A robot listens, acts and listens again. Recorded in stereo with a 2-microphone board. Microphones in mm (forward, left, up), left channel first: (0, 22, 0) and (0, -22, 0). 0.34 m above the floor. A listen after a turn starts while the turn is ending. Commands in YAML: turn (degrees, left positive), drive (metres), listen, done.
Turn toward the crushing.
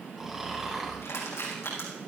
turn: 90
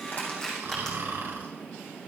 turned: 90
turn: 10
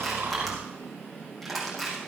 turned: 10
done: "Found it: crushing, straight ahead."